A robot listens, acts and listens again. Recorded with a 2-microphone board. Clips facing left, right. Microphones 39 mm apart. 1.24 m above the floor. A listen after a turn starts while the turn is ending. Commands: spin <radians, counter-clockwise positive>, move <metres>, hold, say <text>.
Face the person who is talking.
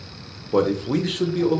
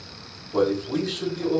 spin 0.96
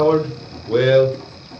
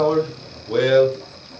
spin 0.17
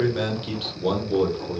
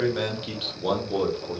say Facing the man speaking, 1 to 2 m away.